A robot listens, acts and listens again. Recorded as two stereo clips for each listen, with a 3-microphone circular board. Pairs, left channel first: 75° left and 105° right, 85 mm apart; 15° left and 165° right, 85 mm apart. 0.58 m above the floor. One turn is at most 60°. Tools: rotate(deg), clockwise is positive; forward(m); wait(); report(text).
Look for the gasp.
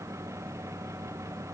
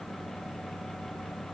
wait()
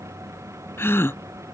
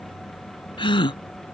rotate(-15)
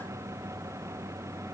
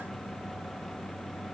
report("Facing where the gasp came from. I can't hear it now.")